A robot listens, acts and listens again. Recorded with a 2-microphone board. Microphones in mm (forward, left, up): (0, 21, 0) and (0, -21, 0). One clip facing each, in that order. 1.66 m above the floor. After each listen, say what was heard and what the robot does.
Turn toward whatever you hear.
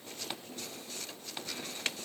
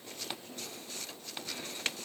Keep listening.
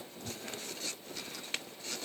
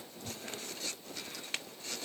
Keep listening.
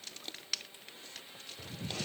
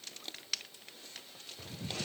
The blender: about 25° left or 155° left. Turn 25° left.
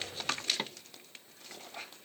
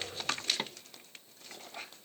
Keep listening.
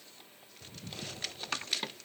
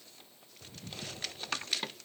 Keep listening.
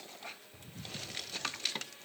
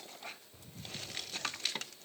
I heard a blender, but can't make it out now. It was about straight ahead or 130° left.